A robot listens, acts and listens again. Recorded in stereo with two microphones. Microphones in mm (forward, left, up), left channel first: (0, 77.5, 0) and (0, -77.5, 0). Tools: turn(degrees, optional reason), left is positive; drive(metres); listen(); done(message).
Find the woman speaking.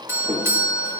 listen()
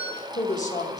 turn(degrees=50, reason="The woman speaking: about 50° left or 130° left.")
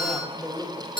done("Found it: a woman speaking, straight ahead.")